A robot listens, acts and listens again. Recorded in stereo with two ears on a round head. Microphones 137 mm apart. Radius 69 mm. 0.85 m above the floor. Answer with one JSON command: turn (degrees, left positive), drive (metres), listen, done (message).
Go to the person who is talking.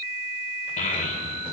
{"turn": 55}
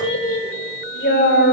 {"turn": 70}
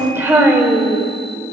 {"turn": -15}
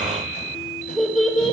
{"drive": 1.0}
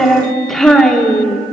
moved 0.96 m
{"drive": 1.0}
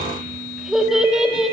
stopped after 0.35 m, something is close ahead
{"done": "I am next to the child speaking."}